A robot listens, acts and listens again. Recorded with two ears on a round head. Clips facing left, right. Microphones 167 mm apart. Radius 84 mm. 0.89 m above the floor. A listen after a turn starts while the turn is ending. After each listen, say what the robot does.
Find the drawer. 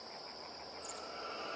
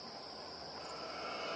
Keep listening.
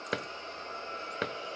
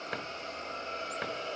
Turn 50° left.
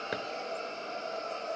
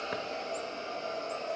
Keep listening.
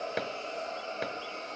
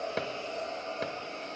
Facing the drawer.